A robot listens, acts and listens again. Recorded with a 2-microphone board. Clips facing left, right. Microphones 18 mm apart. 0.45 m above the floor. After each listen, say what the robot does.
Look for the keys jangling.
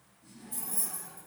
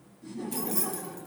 Turn 60° right.
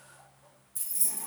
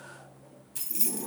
Turn 55° right.
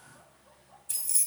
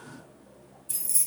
Turn 10° left.
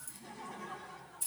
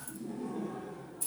Facing the keys jangling.